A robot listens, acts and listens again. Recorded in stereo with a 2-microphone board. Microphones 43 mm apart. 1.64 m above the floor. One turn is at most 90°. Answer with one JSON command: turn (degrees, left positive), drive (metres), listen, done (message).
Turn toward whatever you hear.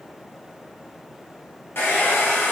{"turn": 60}
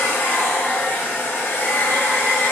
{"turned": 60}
{"turn": 60}
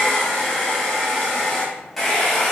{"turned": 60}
{"done": "Facing the hair dryer."}